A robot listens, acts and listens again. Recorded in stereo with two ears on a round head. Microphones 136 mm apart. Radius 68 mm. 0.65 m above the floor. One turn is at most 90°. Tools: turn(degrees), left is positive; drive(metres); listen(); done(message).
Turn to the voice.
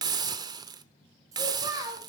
turn(degrees=-25)
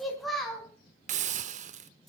done("Found it: a child speaking, straight ahead, 2 to 4 m away.")